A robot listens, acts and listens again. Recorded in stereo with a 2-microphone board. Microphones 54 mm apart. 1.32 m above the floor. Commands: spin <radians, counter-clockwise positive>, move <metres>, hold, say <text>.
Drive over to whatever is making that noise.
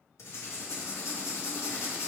spin 1.31
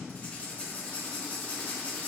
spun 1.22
spin 0.61
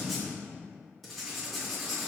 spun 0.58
move 1.0
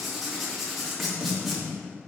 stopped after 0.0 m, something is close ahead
say Blocked. The writing is further on, straight ahead.